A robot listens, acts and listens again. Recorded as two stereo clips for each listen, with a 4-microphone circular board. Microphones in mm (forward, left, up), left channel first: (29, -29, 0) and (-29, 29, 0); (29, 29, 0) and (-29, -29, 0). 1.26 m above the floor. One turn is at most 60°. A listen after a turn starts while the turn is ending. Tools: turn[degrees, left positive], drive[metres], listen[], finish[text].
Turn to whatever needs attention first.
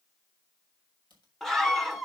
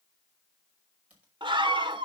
Thought: The scream: 130° right.
Action: turn[-60]
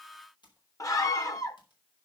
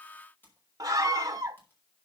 Thought: The scream is now 90° right.
Action: turn[-60]
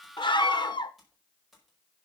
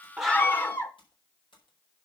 Thought: The scream is now 20° right.
Action: turn[-20]
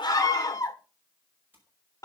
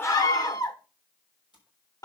Action: finish[Facing the scream, 1 to 2 m away.]